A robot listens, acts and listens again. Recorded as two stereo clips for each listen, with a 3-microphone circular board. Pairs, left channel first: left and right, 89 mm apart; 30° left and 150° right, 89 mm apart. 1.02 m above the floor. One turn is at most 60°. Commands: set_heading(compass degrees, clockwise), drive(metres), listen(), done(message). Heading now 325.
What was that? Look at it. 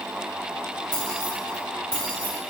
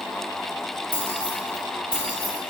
set_heading(275)
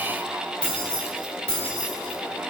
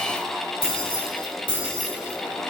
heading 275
set_heading(260)
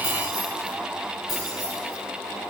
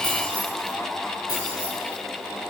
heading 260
done("Facing the keys jangling.")